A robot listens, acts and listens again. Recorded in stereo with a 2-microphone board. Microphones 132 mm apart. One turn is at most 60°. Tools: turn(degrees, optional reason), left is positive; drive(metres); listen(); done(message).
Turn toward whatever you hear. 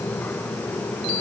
listen()
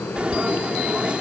turn(degrees=-30)
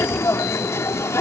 turn(degrees=20, reason="So it is at 20° left.")
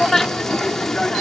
done("Facing the frying.")